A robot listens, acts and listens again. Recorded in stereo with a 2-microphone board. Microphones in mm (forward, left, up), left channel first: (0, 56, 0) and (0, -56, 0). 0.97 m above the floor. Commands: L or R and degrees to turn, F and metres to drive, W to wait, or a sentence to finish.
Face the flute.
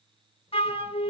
L60
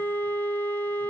L20
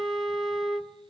Found it: a flute, straight ahead.